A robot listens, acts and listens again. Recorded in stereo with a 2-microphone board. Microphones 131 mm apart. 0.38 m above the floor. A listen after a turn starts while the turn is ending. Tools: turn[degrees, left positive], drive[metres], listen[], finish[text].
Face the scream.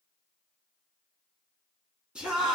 Action: turn[-30]
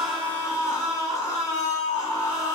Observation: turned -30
Thought: So it is at 25° left.
Action: turn[25]
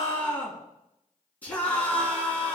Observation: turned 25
Thought: The scream is now 15° left.
Action: turn[15]
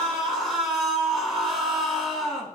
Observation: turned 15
Action: finish[Found it: a scream, straight ahead.]